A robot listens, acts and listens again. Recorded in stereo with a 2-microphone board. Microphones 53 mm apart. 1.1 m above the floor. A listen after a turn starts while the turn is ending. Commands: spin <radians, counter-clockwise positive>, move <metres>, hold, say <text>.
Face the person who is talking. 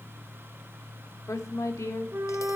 spin 1.57
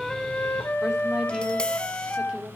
spin -0.26
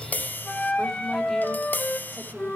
hold
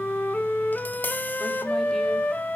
hold
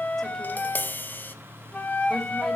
say Facing where the woman speaking came from. I can't hear it now.